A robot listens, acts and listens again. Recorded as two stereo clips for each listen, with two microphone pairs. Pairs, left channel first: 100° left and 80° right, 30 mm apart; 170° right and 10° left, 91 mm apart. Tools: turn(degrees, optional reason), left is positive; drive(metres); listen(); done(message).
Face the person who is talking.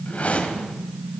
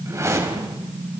listen()
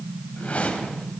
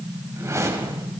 listen()
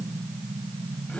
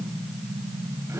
done("I can't make out anyone speaking to turn to.")